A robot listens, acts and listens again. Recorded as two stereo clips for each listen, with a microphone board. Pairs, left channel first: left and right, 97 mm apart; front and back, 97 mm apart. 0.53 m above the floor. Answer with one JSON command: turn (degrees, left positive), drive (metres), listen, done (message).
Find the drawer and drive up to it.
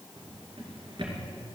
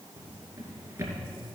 {"turn": -125}
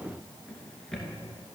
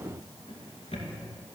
{"drive": 1.0}
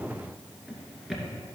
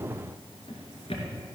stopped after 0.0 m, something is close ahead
{"done": "Something is in my way. I am facing the drawer but have not reached it."}